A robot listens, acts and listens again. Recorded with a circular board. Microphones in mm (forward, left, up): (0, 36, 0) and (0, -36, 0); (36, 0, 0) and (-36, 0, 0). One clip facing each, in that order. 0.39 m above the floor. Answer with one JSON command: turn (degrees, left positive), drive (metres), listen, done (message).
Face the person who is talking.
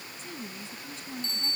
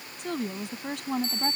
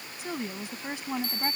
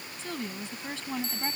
{"turn": -75}
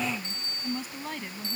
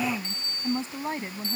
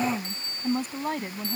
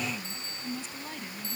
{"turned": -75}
{"turn": -25}
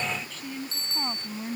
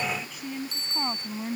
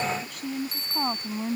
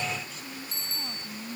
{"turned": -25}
{"turn": -10}
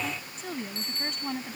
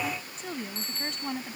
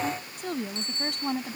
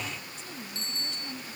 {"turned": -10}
{"done": "Found it: a woman speaking, straight ahead."}